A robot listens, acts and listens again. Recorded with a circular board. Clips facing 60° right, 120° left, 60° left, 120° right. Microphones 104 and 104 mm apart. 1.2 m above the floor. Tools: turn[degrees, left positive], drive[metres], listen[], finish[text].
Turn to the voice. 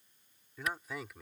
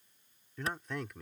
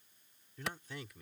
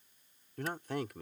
Thought: The man speaking: 145° right.
Action: turn[-145]
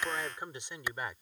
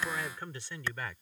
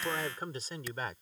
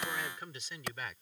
Thought: The man speaking is now 10° left.
Action: turn[10]
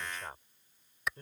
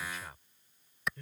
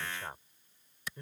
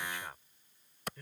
Action: finish[Facing the man speaking.]